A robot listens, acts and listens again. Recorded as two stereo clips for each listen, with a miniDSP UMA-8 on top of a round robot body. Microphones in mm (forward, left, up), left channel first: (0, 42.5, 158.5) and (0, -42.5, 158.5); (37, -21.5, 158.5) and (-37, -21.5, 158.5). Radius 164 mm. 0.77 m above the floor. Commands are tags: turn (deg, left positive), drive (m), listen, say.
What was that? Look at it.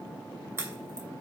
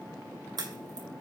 <turn deg="-155"/>
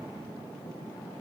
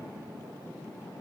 <say>I heard a crack from this way, but can't make it out now.</say>